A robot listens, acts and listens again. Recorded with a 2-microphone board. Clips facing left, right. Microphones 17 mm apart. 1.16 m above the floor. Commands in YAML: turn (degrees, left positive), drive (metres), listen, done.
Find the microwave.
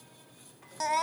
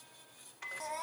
turn: -90
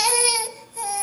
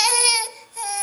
listen: true
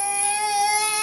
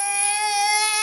listen: true
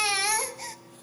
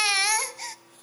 done: "Found it: a microwave, straight ahead."